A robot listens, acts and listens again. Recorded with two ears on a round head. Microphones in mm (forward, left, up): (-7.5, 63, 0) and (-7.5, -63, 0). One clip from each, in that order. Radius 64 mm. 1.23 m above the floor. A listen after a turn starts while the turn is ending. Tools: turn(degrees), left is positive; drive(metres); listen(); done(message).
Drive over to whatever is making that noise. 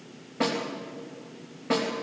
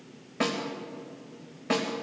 turn(degrees=-90)
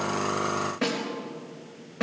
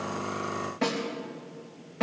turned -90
drive(metres=1.0)
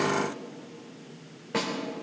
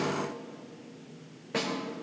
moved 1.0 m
drive(metres=1.0)
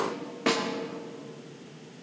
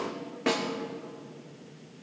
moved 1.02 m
turn(degrees=10)
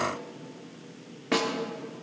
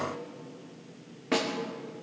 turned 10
drive(metres=1.0)
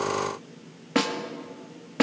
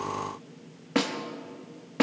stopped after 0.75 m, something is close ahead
done("I am next to the snare drum.")